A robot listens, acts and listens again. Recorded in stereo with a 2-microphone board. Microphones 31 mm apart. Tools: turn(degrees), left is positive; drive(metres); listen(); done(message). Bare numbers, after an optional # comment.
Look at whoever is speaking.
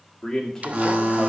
turn(30)
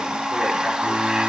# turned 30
listen()
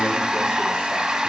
listen()
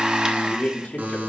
# So it is at 135° left.
turn(135)
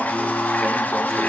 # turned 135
listen()
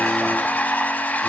listen()
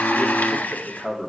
done("Found it: a man speaking, straight ahead.")